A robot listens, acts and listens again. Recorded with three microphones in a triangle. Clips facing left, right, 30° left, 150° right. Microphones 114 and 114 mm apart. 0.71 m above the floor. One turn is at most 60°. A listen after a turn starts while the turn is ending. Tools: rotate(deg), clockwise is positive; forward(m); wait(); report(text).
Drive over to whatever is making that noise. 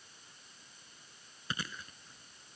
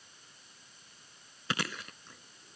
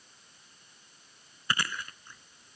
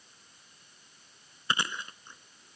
rotate(60)
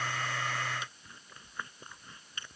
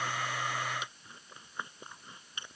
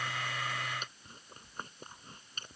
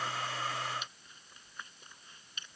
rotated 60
rotate(20)
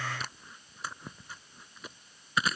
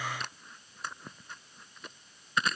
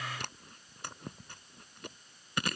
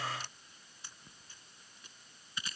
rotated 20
forward(1.0)
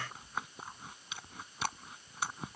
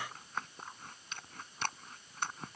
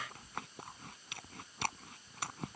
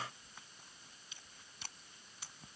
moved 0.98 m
forward(1.0)
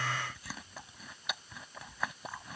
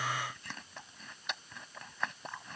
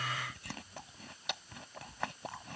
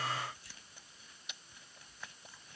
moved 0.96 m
forward(1.0)
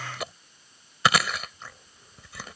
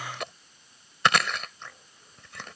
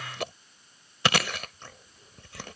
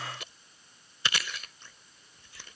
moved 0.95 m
forward(1.0)
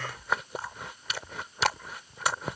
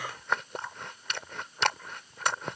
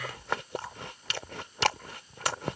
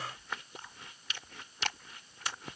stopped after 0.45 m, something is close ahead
report("Arrived at the chewing, straight ahead.")